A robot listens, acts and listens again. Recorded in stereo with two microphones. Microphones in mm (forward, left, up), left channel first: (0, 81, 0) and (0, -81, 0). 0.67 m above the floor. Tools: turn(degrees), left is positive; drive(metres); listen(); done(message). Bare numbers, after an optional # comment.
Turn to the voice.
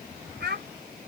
turn(-90)
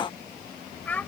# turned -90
# So it is at 10° left.
turn(10)
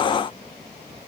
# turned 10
listen()
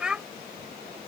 done("Facing the child speaking.")